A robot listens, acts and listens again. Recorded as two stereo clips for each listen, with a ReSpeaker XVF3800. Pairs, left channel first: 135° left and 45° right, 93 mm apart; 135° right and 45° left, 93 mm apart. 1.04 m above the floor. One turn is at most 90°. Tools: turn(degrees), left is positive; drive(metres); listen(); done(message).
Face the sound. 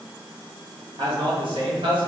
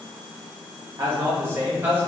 turn(degrees=-25)
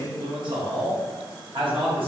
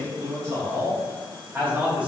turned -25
turn(degrees=-30)
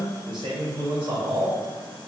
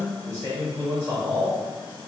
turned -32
turn(degrees=-20)
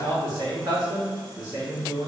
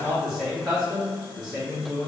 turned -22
done("Found it: a man speaking, straight ahead.")